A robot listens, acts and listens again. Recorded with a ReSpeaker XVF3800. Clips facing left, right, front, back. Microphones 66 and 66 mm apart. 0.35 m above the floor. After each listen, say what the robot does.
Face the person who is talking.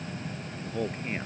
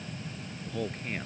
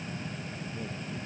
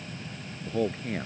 Turn 170° left.
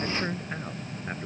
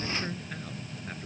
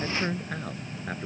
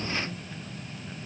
Turn 30° left.
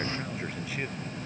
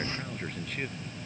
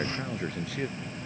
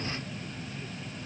Facing the man speaking.